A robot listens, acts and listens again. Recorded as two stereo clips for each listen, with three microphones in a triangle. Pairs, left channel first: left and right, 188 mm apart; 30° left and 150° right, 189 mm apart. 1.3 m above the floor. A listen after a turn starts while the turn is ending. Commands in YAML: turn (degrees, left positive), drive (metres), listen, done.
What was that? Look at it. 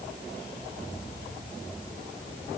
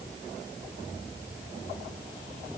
listen: true
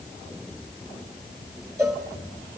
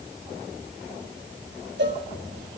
turn: -165
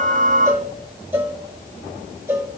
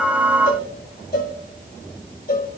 turn: -10
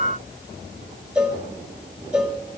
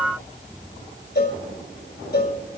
done: "Found it: a cowbell, straight ahead, 1 to 2 m away."